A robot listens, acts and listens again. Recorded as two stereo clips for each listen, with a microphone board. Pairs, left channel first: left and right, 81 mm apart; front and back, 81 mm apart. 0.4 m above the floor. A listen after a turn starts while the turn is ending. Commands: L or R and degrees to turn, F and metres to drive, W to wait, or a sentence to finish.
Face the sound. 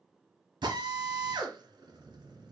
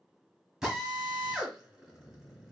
R95
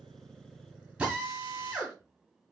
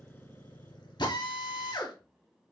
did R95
R15
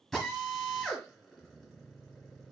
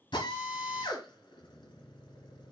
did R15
Facing the drill.